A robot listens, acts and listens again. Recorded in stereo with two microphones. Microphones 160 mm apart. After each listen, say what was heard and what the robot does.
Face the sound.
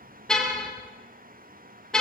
Turn 30° left.
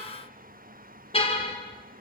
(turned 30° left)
So it is at 145° left. Turn 145° left.
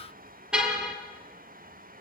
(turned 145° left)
Found it: a car horn, straight ahead, over 4 m away.